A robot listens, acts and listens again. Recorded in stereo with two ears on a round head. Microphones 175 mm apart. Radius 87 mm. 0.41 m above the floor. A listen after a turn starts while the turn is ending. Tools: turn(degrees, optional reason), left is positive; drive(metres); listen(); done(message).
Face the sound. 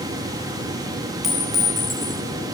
turn(degrees=30)
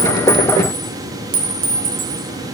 turn(degrees=-30, reason="So it is at 30° right.")
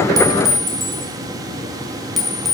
done("Found it: a clink, straight ahead.")